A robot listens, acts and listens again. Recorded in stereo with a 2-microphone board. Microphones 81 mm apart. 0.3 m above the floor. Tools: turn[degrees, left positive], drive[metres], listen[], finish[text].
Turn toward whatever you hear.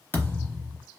Thought: The thud: about 25° left or 155° left.
Action: turn[25]
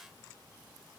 Action: listen[]
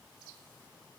Action: finish[I heard a thud, but can't make it out now. It was about straight ahead or 130° left.]